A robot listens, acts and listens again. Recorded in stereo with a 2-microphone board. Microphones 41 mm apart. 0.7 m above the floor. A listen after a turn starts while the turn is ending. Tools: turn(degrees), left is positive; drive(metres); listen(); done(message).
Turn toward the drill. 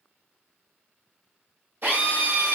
turn(degrees=-50)
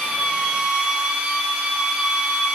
turn(degrees=-20)
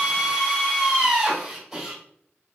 done("Found it: a drill, straight ahead, 1 to 2 m away.")